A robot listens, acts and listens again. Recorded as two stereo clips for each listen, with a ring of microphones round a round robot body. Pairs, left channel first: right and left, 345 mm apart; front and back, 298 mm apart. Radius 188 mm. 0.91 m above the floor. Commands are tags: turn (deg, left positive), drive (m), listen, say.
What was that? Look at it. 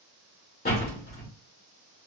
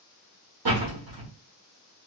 <turn deg="-155"/>
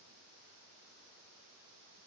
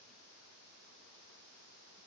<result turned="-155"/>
<say>Facing where the door slam came from. I can't hear it now.</say>